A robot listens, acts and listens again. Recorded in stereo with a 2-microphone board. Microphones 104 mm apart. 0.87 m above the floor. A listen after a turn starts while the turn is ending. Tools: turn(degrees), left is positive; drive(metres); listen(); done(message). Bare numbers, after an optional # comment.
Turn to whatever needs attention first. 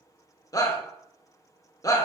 # The shout: about 30° left or 150° left.
turn(30)
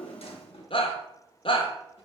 # So it is at 115° left.
turn(115)
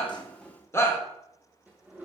# The shout is now 25° left.
turn(25)
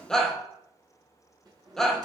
done("Found it: a shout, straight ahead, under 1 m away.")